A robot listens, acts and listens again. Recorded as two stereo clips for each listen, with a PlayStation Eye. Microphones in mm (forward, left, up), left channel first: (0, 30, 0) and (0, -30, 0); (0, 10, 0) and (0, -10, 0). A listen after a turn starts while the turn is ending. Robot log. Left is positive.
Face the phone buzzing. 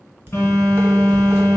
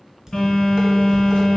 note: The phone buzzing: about 45° left or 135° left.
cmd yaw +45
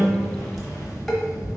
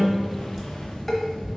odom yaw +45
note: So it is at 90° left.
cmd yaw +90
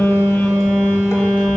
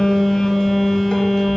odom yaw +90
note: The phone buzzing is now 20° left.
cmd yaw +20
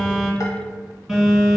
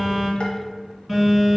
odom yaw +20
end: Found it: a phone buzzing, straight ahead.